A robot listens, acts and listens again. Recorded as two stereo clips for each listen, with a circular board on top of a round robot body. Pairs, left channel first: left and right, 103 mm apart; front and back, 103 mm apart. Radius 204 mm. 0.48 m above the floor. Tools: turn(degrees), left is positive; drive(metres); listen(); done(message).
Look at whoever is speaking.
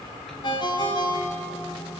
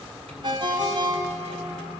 listen()
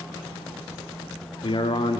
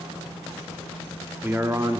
turn(degrees=125)
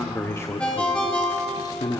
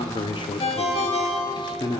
turn(degrees=45)
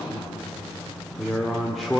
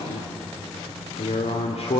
done("Facing the man speaking, 2 to 4 m away.")